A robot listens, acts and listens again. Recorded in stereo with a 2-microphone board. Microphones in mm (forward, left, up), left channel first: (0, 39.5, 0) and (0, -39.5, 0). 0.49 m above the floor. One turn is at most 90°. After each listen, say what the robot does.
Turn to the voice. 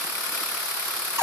Keep listening.
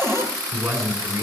Turn 50° right.
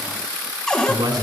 Turn 80° right.
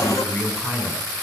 Turn 30° left.
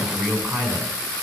Facing the man speaking, 2 to 4 m away.